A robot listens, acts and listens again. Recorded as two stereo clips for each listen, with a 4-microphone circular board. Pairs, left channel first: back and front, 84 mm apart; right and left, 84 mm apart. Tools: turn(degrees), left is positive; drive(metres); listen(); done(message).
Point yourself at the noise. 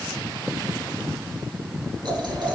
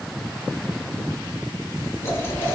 turn(degrees=-30)
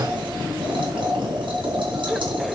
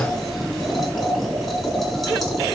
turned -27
done("Found it: boiling, straight ahead, over 4 m away.")